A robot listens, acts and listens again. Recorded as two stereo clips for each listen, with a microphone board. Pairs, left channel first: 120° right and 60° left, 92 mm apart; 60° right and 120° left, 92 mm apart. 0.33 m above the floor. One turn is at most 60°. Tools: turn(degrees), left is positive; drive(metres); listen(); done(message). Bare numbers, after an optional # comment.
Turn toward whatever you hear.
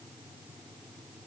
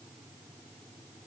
listen()
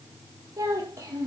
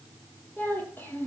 done("Facing the child speaking.")